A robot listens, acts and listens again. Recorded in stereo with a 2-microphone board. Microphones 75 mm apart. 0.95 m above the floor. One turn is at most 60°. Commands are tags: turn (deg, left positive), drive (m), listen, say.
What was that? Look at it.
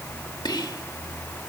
<turn deg="60"/>
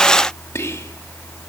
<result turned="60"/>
<turn deg="45"/>
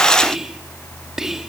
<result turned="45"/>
<say>Found it: whispering, straight ahead.</say>